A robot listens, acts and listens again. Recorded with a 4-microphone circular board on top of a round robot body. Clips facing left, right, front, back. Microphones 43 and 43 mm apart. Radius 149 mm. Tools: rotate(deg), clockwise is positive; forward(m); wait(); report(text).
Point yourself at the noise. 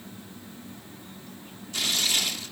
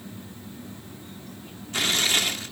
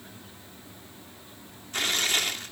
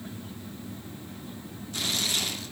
rotate(45)
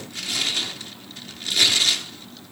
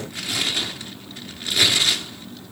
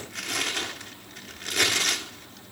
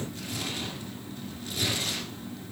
rotate(15)
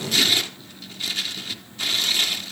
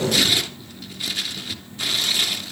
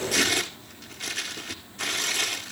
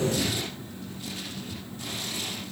report("Found it: tearing paper, straight ahead.")